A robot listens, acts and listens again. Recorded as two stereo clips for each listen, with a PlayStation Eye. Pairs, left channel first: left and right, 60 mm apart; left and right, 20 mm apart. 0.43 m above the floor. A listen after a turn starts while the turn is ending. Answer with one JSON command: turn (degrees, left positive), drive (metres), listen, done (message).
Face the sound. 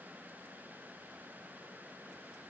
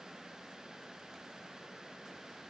{"listen": true}
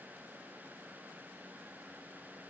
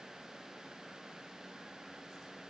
{"listen": true}
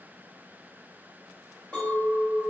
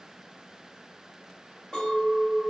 {"turn": 15}
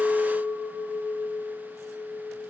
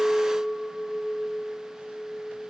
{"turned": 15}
{"done": "Facing the clink."}